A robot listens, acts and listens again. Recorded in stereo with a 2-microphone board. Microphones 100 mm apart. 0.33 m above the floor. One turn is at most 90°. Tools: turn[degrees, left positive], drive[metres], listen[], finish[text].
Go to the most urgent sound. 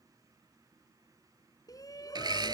Thought: The shout: about 40° left or 140° left.
Action: turn[40]
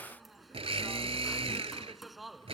Action: drive[1.0]
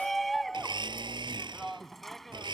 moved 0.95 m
Action: drive[1.0]
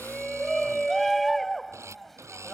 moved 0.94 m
Action: drive[1.0]
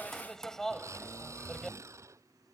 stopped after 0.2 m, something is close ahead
Action: finish[Arrived at the shout, straight ahead.]